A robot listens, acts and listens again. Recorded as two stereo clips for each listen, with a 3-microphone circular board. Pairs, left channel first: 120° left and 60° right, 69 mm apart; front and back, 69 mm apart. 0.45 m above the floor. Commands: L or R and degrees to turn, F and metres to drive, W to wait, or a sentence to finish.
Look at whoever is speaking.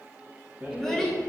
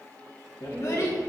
L40
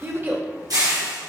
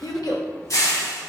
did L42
Facing the child speaking, under 1 m away.